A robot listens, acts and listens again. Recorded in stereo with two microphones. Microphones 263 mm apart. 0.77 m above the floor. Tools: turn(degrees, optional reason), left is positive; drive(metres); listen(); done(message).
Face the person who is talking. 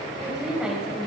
turn(degrees=-30)
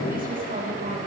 listen()
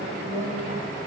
turn(degrees=-145, reason="So it is at 145° right.")
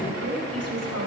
turn(degrees=-65, reason="The woman speaking is now 65° right.")
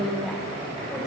done("Facing the woman speaking.")